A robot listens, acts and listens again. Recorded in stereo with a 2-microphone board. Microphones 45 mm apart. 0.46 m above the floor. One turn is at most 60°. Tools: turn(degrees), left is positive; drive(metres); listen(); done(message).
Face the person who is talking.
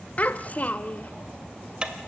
turn(degrees=35)
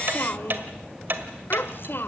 turn(degrees=60)
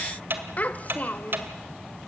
turn(degrees=45)
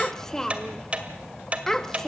turn(degrees=15)
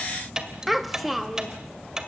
done("Found it: a child speaking, straight ahead, 1 to 2 m away.")